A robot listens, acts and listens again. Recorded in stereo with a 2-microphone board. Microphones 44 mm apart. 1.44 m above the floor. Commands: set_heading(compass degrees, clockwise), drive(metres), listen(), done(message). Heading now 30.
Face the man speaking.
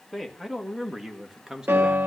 set_heading(60)
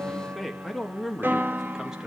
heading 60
set_heading(90)
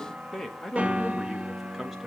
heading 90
set_heading(120)
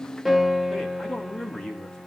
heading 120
set_heading(105)
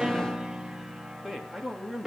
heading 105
done("Facing the man speaking, 2 to 4 m away.")